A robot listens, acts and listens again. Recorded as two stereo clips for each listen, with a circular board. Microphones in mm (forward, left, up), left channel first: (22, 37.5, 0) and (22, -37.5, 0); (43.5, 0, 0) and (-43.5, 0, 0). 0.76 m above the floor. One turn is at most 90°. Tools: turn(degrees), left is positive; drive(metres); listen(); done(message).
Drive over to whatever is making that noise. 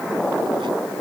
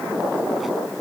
listen()
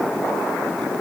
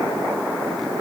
listen()
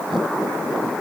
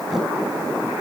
done("I can't make out anything to turn to.")